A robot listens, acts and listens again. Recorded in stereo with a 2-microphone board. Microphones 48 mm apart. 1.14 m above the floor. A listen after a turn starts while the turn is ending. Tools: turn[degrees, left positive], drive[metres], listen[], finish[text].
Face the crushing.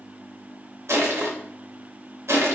Thought: The crushing: about 70° right or 110° right.
Action: turn[-70]
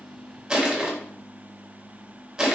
Thought: So it is at 15° right.
Action: turn[-15]
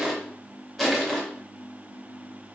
Action: finish[Facing the crushing.]